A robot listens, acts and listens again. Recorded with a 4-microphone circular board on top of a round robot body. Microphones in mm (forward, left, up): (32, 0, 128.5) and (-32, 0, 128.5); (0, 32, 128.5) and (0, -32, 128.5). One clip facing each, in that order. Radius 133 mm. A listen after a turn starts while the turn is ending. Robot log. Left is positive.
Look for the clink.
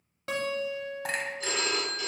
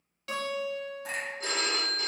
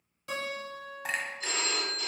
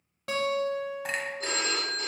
end: Found it: a clink, straight ahead.